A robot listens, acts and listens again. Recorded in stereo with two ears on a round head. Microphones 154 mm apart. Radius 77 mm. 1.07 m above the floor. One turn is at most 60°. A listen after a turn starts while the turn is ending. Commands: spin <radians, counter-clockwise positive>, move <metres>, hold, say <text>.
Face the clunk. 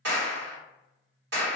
hold
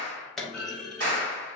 spin 0.52
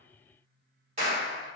hold
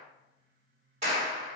say I heard a clunk, but can't make it out now. It was about 30° right or 150° left.